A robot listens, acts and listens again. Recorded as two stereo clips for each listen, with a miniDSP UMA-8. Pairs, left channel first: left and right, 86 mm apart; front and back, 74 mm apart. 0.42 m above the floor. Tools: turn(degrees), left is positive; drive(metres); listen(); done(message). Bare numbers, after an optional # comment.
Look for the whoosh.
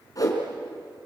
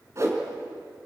# The whoosh: 135° left.
turn(135)
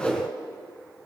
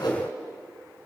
# The whoosh is now 15° left.
turn(15)
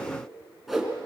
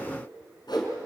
done("Found it: a whoosh, straight ahead, 2 to 4 m away.")